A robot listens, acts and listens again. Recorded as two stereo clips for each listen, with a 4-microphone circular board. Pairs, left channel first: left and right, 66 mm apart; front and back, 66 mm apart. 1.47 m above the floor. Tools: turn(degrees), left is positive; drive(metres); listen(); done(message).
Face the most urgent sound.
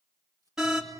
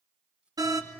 turn(degrees=-175)
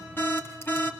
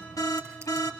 turn(degrees=35)
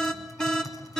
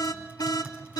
turn(degrees=10)
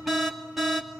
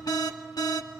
done("Facing the alarm, 2 to 4 m away.")